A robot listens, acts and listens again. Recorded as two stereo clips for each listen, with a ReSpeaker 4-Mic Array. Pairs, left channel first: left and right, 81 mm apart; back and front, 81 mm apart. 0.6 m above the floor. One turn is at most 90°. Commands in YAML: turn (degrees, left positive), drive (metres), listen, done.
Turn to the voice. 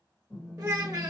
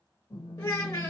turn: -90
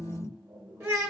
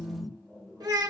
turn: -35
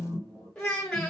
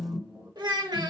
turn: 10
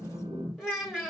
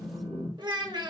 done: "Found it: a child speaking, straight ahead."